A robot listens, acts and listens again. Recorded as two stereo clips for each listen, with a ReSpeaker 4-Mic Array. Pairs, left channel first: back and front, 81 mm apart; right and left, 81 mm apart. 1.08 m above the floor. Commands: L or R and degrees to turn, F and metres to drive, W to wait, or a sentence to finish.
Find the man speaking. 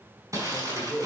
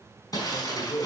R85
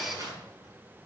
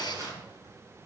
W
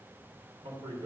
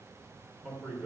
Found it: a man speaking, straight ahead.